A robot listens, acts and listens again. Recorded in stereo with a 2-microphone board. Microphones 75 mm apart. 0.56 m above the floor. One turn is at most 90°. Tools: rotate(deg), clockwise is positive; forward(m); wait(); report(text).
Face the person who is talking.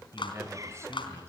rotate(35)
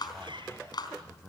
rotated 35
report("Facing the man speaking, 2 to 4 m away.")